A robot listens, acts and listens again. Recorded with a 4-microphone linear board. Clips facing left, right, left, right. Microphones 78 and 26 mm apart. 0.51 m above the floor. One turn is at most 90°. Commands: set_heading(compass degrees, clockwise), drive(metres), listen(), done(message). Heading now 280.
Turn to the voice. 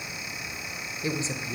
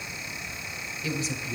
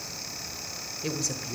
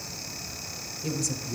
set_heading(250)
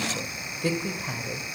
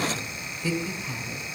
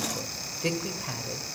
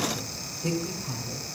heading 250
set_heading(160)
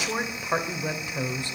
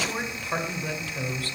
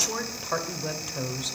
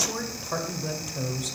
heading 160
set_heading(140)
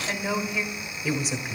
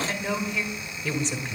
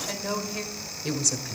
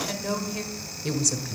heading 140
done("Facing the woman speaking, 1 to 2 m away.")